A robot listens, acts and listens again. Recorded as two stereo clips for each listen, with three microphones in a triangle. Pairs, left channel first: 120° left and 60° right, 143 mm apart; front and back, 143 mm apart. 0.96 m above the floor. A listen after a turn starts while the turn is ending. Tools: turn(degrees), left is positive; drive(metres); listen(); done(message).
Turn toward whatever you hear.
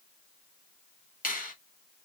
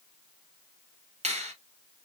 turn(degrees=135)
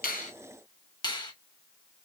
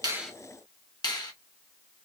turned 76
turn(degrees=60)
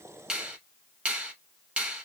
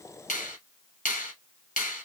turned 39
turn(degrees=20)
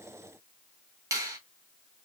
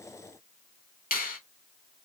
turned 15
done("Found it: a finger snap, straight ahead.")